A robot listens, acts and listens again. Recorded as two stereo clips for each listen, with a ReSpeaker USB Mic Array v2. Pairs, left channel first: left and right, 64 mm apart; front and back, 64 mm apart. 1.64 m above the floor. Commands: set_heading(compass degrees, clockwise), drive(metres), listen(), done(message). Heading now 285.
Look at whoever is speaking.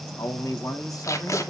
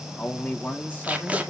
set_heading(225)
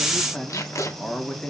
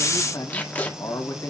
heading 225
set_heading(215)
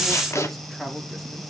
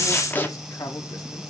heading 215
done("Facing the man speaking, 2 to 4 m away.")